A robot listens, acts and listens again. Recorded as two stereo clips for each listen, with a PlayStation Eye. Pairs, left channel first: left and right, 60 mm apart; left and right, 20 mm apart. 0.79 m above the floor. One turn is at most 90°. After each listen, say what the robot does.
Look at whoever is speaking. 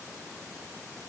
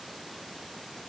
Keep listening.
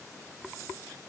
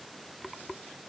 Keep listening.
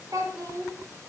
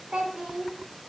Turn 70° right.
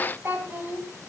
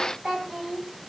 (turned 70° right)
Turn 30° right.
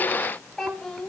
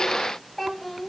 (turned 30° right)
Found it: a child speaking, straight ahead.